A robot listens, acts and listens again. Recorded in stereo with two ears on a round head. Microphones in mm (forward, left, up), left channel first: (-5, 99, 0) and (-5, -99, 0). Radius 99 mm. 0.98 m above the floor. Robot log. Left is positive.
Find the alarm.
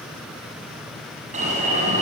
note: The alarm: about 30° right or 150° right.
cmd yaw -30
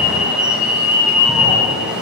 end: Facing the alarm, over 4 m away.